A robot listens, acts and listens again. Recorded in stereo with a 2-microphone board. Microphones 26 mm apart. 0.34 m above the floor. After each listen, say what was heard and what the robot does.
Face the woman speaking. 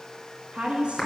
The woman speaking: about 45° right or 135° right. Turn 45° right.
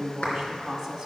So it is at 10° right. Turn 10° right.
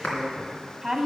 Facing the woman speaking.